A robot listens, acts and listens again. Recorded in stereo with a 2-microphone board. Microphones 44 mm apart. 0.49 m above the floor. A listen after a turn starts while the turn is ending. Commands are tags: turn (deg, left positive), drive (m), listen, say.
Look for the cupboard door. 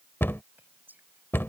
<turn deg="75"/>
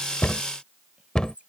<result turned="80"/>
<turn deg="20"/>
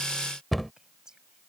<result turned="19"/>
<say>Facing the cupboard door.</say>